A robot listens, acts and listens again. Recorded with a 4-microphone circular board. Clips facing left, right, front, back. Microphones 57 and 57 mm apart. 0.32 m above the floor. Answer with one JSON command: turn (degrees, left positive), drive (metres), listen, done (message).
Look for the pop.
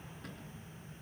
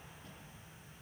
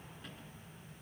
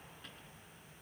{"listen": true}
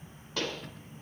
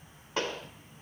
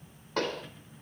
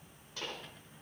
{"turn": -25}
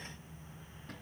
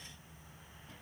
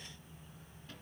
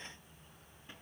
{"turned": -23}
{"done": "Facing where the pop came from. I can't hear it now."}